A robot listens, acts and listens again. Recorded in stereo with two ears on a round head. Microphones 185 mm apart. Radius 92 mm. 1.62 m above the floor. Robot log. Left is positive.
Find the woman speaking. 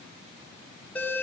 cmd idle
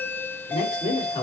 note: The woman speaking: about 25° left or 155° left.
cmd yaw +25
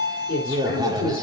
note: So it is at 135° left.
cmd yaw +135
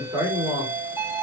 note: The woman speaking is now 10° right.
cmd yaw -10
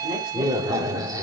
cmd idle
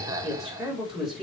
end: Facing the woman speaking.